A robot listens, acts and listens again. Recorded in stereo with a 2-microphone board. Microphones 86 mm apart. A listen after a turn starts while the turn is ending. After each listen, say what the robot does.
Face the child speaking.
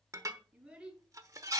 Turn 30° right.
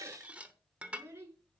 Turn 150° right.
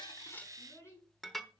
Turn 30° left.
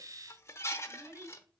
Turn 20° right.
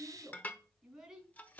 Found it: a child speaking, straight ahead.